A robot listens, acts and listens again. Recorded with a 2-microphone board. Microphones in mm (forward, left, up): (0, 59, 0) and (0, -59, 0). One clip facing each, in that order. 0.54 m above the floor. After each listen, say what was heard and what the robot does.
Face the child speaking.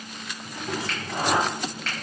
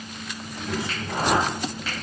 Turn 30° left.
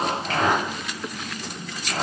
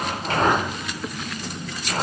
So it is at 30° right. Turn 30° right.
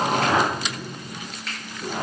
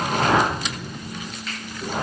Facing the child speaking.